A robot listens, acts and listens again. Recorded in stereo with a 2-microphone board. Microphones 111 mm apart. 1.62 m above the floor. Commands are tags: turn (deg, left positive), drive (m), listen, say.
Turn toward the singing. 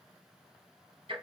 <listen/>
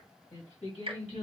<turn deg="90"/>
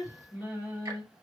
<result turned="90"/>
<turn deg="-20"/>
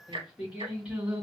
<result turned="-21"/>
<say>Facing the singing, 2 to 4 m away.</say>